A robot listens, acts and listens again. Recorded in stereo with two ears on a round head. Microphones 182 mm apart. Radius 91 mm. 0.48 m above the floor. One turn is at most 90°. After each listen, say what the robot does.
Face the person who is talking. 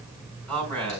Turn 30° left.
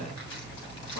Keep listening.
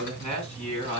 Turn 90° left.
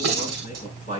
Turn 35° left.
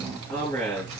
Turn 10° left.
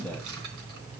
Keep listening.
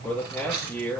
Found it: a man speaking, straight ahead, over 4 m away.